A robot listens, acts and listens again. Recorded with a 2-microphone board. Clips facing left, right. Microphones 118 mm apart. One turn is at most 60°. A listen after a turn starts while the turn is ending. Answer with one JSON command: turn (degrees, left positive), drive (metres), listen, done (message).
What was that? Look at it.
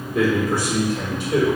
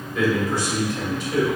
{"turn": 55}
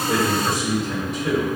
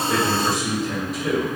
{"done": "Facing the man speaking."}